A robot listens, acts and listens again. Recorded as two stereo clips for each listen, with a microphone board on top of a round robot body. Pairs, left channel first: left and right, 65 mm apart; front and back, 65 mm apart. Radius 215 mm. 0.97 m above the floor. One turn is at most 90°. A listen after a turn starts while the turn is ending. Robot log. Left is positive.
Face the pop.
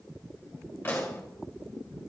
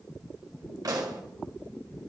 note: The pop: 155° left.
cmd yaw +90
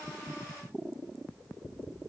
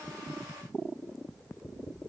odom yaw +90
note: Nothing new. It was at 65° left.
cmd yaw +65
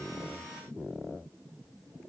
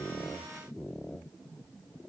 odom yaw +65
end: I heard a pop from this way, but can't make it out now.